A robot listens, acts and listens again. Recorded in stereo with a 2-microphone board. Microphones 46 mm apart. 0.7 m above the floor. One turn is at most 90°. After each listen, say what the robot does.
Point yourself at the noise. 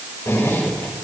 Turn 90° left.
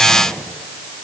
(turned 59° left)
Turn 30° left.
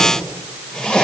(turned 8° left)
Turn 15° left.
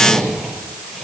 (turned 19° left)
Facing the zipper, over 4 m away.